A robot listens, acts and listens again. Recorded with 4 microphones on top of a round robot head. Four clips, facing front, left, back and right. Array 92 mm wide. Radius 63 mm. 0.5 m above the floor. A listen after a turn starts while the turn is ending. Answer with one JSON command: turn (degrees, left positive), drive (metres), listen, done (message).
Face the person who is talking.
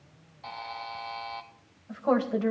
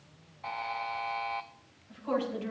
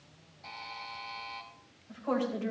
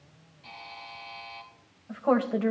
{"turn": -60}
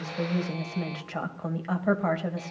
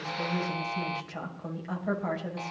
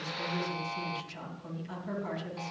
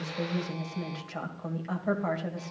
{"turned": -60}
{"done": "Facing the woman speaking."}